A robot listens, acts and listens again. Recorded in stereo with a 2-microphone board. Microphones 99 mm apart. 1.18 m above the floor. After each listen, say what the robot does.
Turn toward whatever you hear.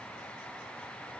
Keep listening.
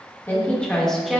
Turn 30° right.
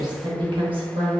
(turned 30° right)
Turn 110° right.
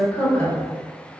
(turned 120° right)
Turn 25° left.
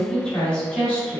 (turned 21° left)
Turn 15° left.
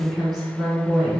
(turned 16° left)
Found it: a woman speaking, straight ahead.